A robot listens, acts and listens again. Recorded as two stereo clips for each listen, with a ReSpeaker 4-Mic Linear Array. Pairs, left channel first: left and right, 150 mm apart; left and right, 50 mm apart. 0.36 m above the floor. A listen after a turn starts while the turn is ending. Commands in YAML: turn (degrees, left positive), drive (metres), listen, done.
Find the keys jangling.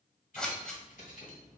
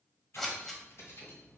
turn: 60
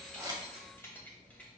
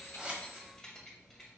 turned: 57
turn: 10
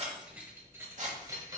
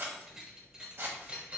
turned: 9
turn: -30
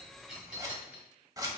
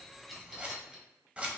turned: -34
turn: -10
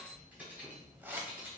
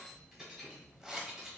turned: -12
turn: -15
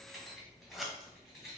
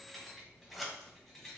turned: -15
done: "Found it: keys jangling, straight ahead, 1 to 2 m away."